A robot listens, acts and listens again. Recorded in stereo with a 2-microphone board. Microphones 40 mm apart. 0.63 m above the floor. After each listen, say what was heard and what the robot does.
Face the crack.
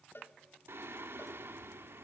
Keep listening.
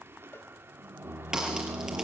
The crack: about 15° right or 165° right. Turn 15° right.
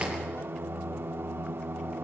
So it is at 150° right. Turn 150° right.
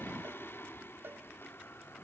Facing where the crack came from. I can't hear it now.